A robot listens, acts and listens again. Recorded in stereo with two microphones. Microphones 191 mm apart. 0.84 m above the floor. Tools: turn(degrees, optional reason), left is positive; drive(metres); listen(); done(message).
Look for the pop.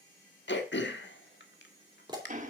turn(degrees=-25, reason="The pop: about 25° right or 155° right.")
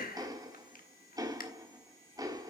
listen()
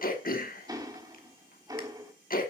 done("I heard a pop, but can't make it out now. It was about straight ahead or 130° right.")